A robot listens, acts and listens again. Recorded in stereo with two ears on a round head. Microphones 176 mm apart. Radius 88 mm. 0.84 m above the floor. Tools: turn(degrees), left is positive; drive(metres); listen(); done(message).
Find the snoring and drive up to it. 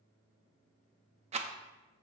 listen()
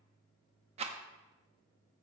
listen()
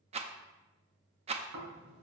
turn(degrees=-55)
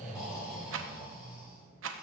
drive(metres=1.0)
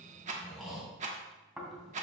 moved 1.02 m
drive(metres=1.0)
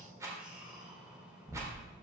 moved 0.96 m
drive(metres=1.0)
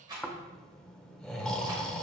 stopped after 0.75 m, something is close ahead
done("I am next to the snoring.")